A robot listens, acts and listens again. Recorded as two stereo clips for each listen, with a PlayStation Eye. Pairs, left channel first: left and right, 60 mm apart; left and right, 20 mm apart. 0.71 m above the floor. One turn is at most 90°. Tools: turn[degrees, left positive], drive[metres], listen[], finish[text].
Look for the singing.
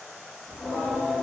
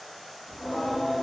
Action: turn[-30]
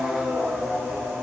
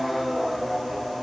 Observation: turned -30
Thought: So it is at 135° right.
Action: turn[-90]
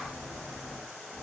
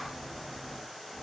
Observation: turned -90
Thought: The singing is now 60° right.
Action: turn[-60]
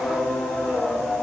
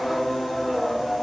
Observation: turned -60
Thought: The singing is now 10° left.
Action: turn[10]
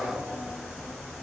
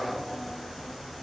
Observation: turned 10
Action: finish[Found it: singing, straight ahead.]